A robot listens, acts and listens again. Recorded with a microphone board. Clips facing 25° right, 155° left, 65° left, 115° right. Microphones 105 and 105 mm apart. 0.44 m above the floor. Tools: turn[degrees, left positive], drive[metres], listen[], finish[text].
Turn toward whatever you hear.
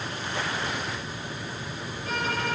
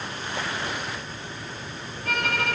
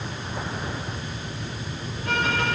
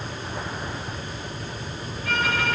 Thought: The violin: 130° left.
Action: turn[130]
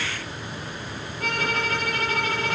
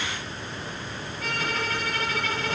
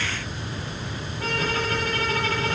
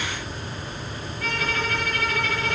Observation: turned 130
Thought: The violin is now 15° left.
Action: turn[15]
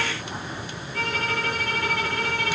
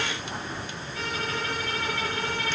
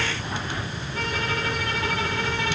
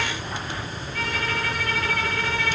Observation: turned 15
Action: finish[Facing the violin, over 4 m away.]